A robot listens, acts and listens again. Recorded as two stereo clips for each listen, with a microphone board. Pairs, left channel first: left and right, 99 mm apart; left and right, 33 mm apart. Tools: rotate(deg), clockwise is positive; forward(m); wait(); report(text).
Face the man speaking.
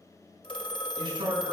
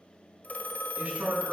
rotate(55)
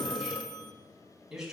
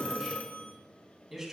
report("Found it: a man speaking, straight ahead.")